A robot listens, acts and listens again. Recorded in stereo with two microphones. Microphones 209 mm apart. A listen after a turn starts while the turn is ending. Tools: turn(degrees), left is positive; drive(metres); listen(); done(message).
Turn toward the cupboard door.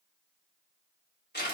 listen()
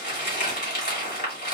listen()
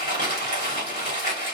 done("I can't make out a cupboard door, only crumpling.")